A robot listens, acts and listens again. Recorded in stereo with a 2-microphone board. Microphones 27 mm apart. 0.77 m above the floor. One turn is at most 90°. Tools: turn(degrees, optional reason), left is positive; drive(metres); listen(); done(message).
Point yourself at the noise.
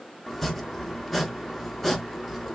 turn(degrees=30)
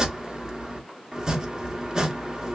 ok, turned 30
turn(degrees=-20, reason="So it is at 20° right.")
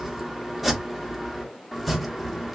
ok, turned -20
done("Found it: chopping, straight ahead, under 1 m away.")